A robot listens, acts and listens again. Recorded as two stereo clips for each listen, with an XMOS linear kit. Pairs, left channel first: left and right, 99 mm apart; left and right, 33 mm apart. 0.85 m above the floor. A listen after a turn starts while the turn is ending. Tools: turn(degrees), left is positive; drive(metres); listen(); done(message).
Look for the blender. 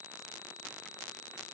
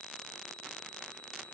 listen()
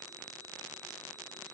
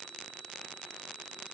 listen()
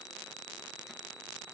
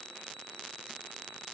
done("I can't make out a blender to turn to.")